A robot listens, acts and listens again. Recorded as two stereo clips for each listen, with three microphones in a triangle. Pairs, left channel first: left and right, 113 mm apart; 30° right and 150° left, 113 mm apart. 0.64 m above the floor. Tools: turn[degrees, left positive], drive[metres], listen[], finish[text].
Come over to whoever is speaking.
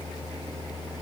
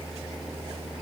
Action: listen[]
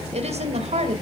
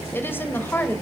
Thought: The woman speaking: 100° right.
Action: turn[-100]
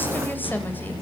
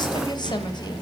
Action: listen[]
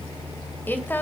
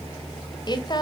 Thought: The woman speaking is now 15° left.
Action: turn[15]
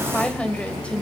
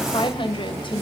Thought: The woman speaking is now 10° left.
Action: turn[10]
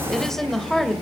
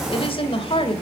Action: drive[1.0]
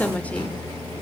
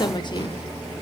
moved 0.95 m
Thought: The woman speaking is now 10° left.
Action: turn[10]
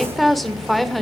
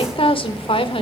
Action: drive[1.0]
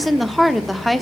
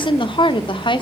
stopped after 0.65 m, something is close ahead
Action: finish[Arrived at the woman speaking, straight ahead.]